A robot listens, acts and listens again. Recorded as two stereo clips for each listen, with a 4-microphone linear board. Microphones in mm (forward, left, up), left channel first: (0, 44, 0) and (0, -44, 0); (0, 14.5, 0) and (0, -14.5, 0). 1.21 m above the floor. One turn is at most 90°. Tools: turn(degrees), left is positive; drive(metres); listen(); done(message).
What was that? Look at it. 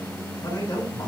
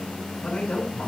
turn(degrees=45)
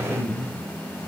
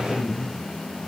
done("Facing the man speaking, over 4 m away.")